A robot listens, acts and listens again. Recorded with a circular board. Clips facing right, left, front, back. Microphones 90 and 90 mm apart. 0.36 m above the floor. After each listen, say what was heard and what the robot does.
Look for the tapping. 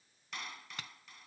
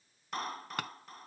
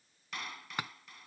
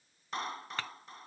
The tapping: 75° left. Turn 75° left.
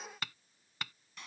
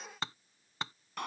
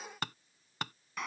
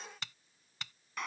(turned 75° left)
The tapping is now 30° left. Turn 30° left.
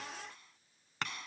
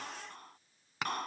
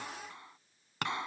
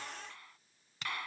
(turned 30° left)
The tapping is now 10° left. Turn 10° left.
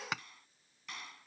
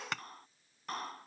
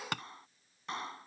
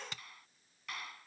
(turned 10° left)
Found it: tapping, straight ahead.